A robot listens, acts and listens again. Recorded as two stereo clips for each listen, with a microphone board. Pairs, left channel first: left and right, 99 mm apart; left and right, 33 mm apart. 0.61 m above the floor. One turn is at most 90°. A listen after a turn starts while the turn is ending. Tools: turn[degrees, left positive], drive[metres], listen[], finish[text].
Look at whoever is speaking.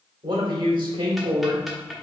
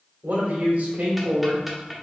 Thought: The man speaking: about 45° right or 135° right.
Action: turn[-45]
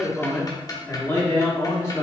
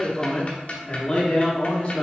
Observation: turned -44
Thought: So it is at 40° left.
Action: turn[40]
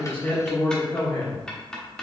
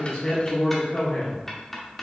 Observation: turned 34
Thought: The man speaking is now 40° left.
Action: turn[40]
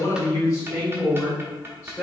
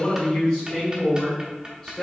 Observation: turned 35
Thought: The man speaking is now 20° left.
Action: turn[20]
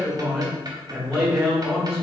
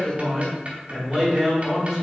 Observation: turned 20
Action: finish[Found it: a man speaking, straight ahead.]